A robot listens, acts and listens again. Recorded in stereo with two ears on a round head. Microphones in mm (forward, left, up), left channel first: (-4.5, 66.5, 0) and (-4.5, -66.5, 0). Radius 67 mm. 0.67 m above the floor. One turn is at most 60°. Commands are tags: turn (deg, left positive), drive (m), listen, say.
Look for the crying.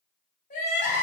<turn deg="55"/>
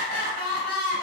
<turn deg="60"/>
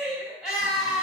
<say>Facing the crying.</say>